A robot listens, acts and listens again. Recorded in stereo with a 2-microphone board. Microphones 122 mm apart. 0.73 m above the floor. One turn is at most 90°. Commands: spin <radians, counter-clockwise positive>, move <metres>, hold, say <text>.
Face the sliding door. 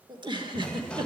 spin 0.52
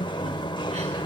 spin 1.57
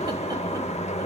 spin 1.13
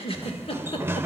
spin -0.35
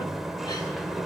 say Facing the sliding door, under 1 m away.